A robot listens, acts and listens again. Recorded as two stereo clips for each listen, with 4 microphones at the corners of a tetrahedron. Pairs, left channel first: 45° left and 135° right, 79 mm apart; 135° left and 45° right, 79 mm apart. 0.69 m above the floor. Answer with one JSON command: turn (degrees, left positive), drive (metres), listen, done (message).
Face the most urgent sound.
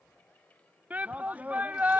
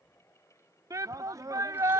{"turn": -70}
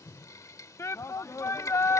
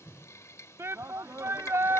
{"done": "Facing the shout."}